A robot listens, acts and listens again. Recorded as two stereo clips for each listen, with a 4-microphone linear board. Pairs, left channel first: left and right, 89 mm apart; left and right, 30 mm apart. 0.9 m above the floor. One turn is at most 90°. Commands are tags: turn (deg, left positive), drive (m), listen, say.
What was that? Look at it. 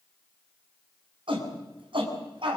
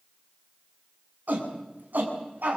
<turn deg="-70"/>
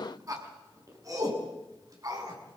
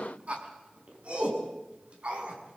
<turn deg="-40"/>
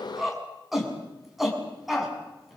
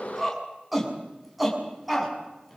<say>Found it: a shout, straight ahead, over 4 m away.</say>